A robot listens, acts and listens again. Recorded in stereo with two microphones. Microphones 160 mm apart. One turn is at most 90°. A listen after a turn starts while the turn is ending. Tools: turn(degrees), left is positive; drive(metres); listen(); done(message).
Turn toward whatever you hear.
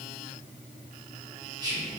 turn(degrees=-25)
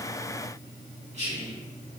turn(degrees=-90)
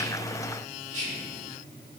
turn(degrees=-50)
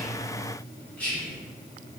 turn(degrees=10)
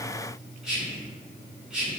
done("Found it: whispering, straight ahead, 1 to 2 m away.")